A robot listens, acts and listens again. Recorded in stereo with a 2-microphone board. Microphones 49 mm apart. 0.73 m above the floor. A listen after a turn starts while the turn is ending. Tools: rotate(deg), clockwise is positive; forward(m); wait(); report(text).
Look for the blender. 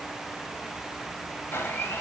rotate(-45)
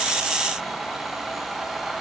report("Found it: a blender, straight ahead, 2 to 4 m away.")